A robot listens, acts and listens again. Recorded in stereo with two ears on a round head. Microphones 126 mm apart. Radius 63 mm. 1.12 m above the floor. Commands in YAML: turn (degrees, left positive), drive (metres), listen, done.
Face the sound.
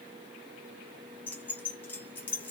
turn: 30
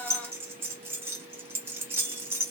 turn: -15
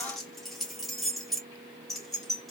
done: "Facing the keys jangling."